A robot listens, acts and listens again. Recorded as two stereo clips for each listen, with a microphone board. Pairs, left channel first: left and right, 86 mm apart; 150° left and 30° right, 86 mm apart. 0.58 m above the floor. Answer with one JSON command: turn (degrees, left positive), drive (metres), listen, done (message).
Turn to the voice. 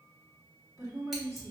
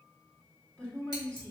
{"turn": -135}
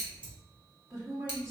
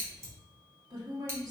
{"turn": -40}
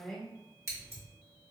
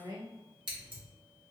{"done": "Facing the woman speaking, 1 to 2 m away."}